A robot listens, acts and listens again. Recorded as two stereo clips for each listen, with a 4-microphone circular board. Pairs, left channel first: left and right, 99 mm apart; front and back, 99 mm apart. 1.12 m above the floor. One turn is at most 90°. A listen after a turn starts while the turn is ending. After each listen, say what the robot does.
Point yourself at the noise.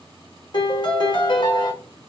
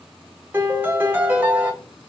Turn 90° left.
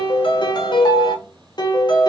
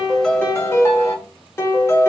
Turn 60° left.
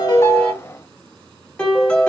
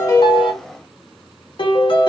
Turn 10° left.
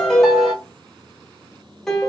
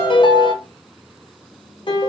Found it: a piano, straight ahead.